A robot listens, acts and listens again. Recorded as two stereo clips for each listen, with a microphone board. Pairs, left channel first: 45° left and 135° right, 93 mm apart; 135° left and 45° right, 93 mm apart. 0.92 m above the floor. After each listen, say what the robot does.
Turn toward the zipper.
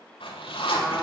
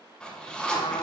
Turn 55° left.
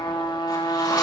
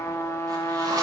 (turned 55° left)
Keep listening.
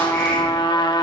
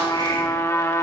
Keep listening.
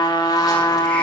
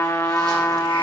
I heard a zipper from this way, but can't make it out now.